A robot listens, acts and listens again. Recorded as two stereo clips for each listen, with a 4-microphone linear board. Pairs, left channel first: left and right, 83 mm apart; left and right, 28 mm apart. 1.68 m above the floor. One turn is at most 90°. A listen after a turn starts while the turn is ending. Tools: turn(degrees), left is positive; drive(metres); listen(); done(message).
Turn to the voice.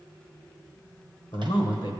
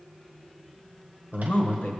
turn(degrees=75)
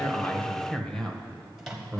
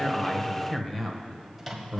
turn(degrees=10)
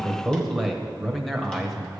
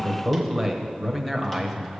done("Found it: a man speaking, straight ahead.")